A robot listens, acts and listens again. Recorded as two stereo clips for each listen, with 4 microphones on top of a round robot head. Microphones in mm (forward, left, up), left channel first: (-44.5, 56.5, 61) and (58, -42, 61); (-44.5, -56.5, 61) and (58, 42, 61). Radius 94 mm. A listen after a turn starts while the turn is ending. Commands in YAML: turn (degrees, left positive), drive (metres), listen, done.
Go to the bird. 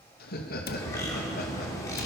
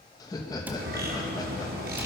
turn: 65
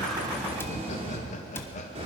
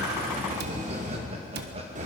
drive: 1.0
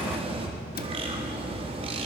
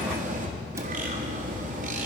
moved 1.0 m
turn: 10
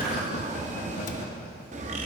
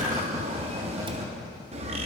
drive: 1.0
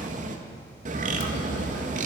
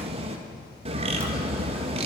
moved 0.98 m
turn: -10
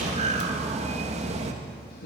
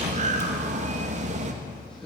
drive: 1.0
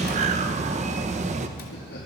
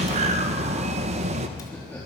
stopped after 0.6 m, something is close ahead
done: "Arrived at the bird, straight ahead."